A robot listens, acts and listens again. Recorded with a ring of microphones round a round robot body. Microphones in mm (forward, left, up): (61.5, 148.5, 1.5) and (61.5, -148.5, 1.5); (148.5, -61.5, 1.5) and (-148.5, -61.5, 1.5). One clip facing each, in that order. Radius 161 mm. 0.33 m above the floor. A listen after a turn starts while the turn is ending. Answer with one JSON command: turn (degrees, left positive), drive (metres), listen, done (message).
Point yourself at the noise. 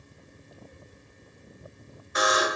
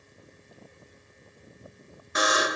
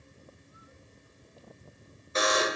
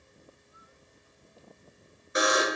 {"turn": -105}
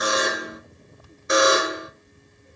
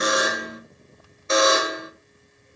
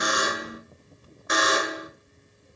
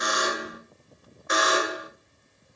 {"turn": 15}
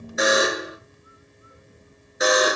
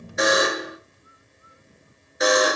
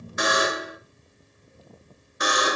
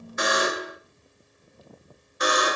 {"done": "Facing the buzzer."}